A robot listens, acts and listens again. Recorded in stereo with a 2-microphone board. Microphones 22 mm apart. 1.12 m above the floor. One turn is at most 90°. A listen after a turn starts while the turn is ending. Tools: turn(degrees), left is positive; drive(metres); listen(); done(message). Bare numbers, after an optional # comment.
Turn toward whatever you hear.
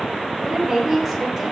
turn(30)
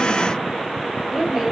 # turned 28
# So it is at 30° right.
turn(-30)
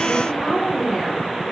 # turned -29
done("Found it: a woman speaking, straight ahead, 2 to 4 m away.")